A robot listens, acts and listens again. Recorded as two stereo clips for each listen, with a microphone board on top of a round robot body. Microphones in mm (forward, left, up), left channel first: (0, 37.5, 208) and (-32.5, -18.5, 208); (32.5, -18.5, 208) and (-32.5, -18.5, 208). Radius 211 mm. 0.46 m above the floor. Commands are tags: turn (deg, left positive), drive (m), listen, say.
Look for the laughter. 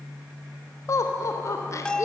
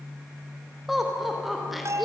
<turn deg="90"/>
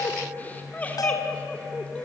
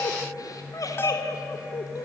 <turn deg="-10"/>
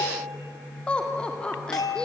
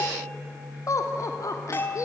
<turn deg="-15"/>
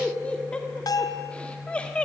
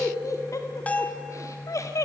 <turn deg="-10"/>
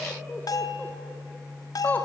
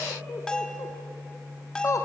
<say>Facing the laughter.</say>